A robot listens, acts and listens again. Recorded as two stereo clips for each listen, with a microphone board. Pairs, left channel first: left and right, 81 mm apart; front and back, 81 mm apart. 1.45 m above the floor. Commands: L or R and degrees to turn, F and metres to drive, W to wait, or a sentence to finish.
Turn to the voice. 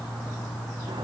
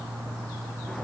W
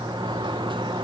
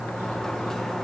W
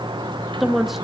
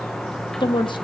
Facing the woman speaking, 2 to 4 m away.